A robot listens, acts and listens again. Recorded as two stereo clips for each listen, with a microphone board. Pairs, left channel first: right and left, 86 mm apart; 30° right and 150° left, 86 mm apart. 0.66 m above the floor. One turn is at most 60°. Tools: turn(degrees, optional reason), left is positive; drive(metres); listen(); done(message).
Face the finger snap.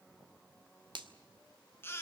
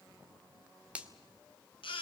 turn(degrees=60, reason="The finger snap: 80° left.")
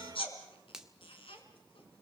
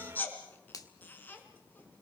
done("Found it: a finger snap, straight ahead.")